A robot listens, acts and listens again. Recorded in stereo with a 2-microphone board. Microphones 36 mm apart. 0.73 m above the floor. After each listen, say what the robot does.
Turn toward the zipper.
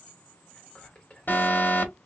Keep listening.
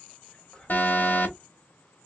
Keep listening.
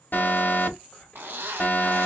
Turn 90° right.
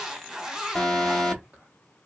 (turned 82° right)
Turn 15° right.
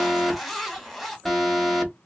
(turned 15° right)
Found it: a zipper, straight ahead, 1 to 2 m away.